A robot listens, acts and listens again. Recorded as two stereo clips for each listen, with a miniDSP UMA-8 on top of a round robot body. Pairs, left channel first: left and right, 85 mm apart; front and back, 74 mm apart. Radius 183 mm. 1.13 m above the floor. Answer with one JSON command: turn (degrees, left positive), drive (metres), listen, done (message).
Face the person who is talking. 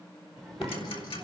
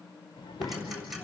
{"done": "Found it: a child speaking, straight ahead."}